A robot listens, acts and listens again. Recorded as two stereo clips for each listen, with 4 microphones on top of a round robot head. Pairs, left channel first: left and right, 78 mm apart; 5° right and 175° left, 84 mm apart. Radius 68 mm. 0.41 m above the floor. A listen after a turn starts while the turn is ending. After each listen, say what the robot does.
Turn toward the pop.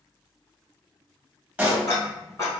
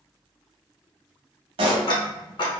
Turn 165° right.
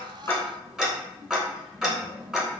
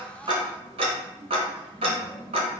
I heard a pop from this way, but can't make it out now.